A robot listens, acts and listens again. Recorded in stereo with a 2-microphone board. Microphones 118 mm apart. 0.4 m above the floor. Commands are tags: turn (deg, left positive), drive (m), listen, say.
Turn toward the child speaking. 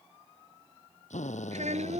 <turn deg="-70"/>
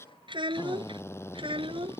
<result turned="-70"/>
<turn deg="-50"/>
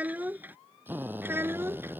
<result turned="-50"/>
<turn deg="-20"/>
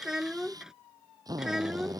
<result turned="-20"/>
<say>Facing the child speaking.</say>